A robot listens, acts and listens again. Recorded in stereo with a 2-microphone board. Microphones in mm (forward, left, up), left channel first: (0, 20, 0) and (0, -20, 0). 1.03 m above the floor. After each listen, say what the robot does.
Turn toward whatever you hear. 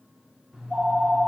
Turn 30° right.
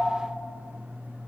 Turn 135° right.
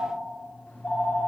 Turn 40° left.
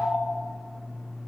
Facing the phone ringing.